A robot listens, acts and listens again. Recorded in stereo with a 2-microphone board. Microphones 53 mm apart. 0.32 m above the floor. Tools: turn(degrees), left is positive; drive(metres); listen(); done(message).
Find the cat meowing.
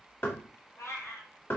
turn(degrees=65)
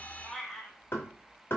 done("Facing the cat meowing, 1 to 2 m away.")